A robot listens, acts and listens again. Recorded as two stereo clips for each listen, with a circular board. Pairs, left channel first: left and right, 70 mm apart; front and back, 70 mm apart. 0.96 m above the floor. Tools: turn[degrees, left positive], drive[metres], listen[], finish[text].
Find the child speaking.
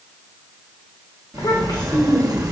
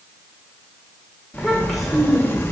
Thought: The child speaking: 90° left.
Action: turn[90]
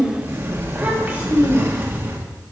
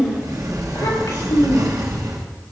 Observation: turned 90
Thought: The child speaking is now 25° right.
Action: turn[-25]
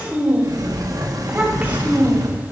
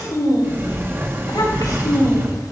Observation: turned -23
Thought: The child speaking is now 20° right.
Action: turn[-20]
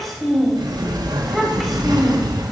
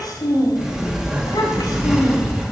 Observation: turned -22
Action: finish[Found it: a child speaking, straight ahead.]